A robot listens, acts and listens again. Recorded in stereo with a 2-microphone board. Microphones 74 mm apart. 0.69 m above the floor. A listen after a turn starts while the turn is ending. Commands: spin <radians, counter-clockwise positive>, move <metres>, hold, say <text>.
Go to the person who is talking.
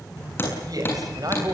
spin -0.96
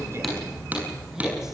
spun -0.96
hold
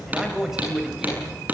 move 1.0
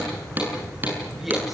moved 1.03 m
hold
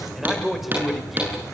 move 1.0
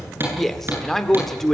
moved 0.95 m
move 1.0
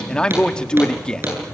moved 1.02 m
spin 0.26
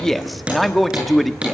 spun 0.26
move 1.0
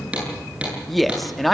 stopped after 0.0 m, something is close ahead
say Arrived at the man speaking, straight ahead.